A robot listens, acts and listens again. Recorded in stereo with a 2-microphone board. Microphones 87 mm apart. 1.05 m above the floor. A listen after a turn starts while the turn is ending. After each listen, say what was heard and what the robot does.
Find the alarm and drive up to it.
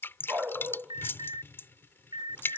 The alarm: about 65° right or 115° right. Turn 65° right.
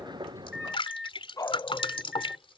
Drive 1.0 m forward.
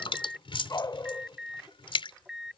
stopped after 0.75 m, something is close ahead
Something is in my way. I am facing the alarm but have not reached it.